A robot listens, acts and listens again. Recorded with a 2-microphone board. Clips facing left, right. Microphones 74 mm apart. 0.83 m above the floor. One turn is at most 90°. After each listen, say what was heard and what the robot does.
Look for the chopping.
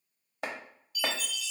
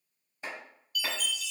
The chopping: about 70° left or 110° left. Turn 70° left.
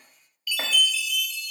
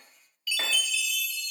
Keep listening.
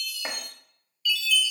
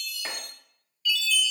So it is at 25° left. Turn 25° left.
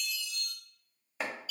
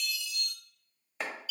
Found it: chopping, straight ahead, 1 to 2 m away.